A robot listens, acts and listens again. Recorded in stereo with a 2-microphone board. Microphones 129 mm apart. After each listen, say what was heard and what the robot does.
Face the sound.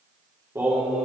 Turn 30° right.
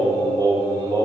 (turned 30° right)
So it is at 150° right. Turn 150° right.
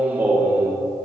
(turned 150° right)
The singing is now 20° right. Turn 20° right.
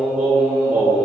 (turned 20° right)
The singing is now 15° right. Turn 15° right.
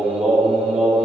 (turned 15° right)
Found it: singing, straight ahead, 2 to 4 m away.